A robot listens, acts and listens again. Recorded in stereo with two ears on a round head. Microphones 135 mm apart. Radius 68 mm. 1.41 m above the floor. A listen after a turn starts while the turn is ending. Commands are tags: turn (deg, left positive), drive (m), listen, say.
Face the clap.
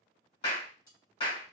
<turn deg="35"/>
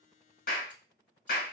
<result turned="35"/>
<turn deg="110"/>
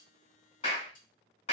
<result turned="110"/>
<turn deg="45"/>
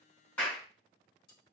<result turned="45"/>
<turn deg="10"/>
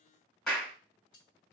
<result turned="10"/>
<say>Facing the clap, 1 to 2 m away.</say>